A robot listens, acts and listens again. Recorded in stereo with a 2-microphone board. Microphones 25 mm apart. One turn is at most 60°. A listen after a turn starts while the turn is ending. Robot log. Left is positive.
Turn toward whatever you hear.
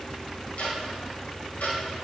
cmd yaw +60
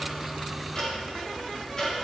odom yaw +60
note: So it is at 30° left.
cmd yaw +30
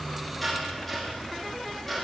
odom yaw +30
end: Found it: ticking, straight ahead.